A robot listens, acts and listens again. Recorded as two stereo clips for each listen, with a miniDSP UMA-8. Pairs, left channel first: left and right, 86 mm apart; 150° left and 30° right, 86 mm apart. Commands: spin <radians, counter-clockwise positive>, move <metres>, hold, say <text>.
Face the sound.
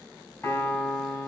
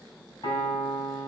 spin 2.44
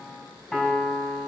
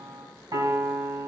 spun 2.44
say Found it: a piano, straight ahead.